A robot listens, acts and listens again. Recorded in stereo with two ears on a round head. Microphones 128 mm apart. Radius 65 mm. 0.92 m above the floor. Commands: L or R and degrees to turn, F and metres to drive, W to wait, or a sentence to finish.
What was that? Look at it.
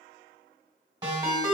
R25
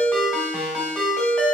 Facing the ringtone, 1 to 2 m away.